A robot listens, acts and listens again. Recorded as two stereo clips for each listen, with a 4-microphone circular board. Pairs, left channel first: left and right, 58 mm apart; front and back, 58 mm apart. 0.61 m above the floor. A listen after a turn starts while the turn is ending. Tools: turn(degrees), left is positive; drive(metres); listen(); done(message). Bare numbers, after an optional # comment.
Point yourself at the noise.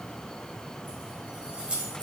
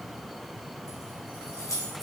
# The keys jangling: 20° right.
turn(-20)
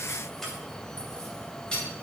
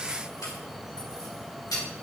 # The keys jangling is now 15° left.
turn(15)
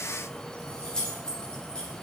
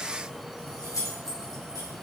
# The keys jangling is now 20° left.
turn(20)
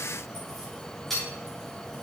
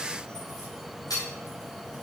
done("Found it: keys jangling, straight ahead.")